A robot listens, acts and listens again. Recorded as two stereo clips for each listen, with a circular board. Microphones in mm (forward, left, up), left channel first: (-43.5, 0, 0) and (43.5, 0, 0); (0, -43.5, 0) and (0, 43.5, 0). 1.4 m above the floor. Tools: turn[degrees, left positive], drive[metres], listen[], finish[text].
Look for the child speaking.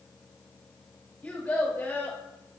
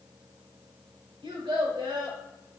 Thought: The child speaking: 110° left.
Action: turn[110]
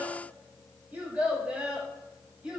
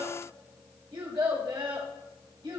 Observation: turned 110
Thought: The child speaking is now 80° left.
Action: turn[80]
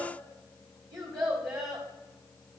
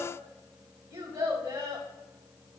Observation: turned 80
Thought: The child speaking is now 40° left.
Action: turn[40]
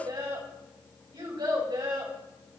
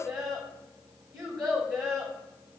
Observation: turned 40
Action: finish[Found it: a child speaking, straight ahead.]